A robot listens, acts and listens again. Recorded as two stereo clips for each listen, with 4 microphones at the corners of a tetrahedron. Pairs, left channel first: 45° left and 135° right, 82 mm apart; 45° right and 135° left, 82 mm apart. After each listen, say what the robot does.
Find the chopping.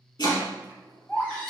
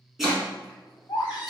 Turn 50° left.
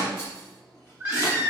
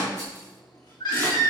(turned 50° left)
Turn 10° left.
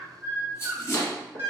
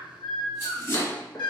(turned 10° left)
Facing the chopping.